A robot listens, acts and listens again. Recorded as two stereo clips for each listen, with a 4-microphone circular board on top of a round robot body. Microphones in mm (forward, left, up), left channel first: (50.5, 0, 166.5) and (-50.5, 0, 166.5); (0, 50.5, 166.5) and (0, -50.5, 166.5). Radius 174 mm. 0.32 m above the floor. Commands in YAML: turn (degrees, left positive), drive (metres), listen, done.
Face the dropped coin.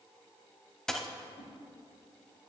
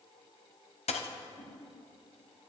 turn: 85
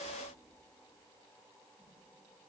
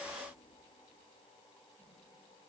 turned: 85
done: "I heard a dropped coin from this way, but can't make it out now."